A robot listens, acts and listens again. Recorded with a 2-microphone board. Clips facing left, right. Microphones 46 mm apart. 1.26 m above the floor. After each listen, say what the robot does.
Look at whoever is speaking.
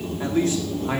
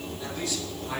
Turn 40° left.
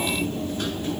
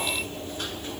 Keep listening.
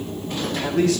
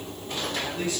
Turn 100° left.
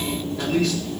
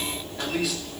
Facing the man speaking.